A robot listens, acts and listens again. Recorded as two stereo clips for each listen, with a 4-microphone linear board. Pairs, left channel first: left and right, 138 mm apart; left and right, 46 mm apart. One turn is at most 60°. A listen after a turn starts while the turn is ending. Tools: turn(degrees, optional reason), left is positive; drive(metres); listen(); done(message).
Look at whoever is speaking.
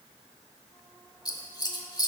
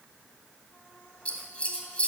listen()
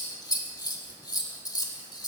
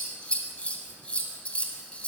listen()
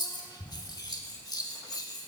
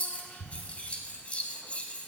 done("I can't make out anyone speaking, only scissors.")